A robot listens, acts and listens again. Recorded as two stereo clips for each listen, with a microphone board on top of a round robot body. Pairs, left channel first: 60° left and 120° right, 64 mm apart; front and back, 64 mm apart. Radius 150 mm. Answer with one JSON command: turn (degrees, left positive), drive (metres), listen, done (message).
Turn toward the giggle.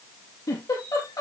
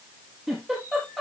{"turn": 90}
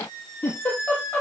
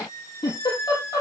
{"done": "Found it: a giggle, straight ahead."}